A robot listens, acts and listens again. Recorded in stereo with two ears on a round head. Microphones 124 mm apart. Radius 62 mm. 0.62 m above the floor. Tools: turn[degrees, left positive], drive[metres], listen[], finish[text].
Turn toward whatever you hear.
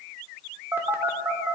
Thought: The phone buzzing: about 15° right or 165° right.
Action: turn[-15]
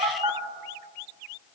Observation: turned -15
Thought: So it is at 150° right.
Action: turn[-150]
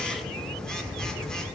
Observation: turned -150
Action: finish[Found it: a phone buzzing, straight ahead.]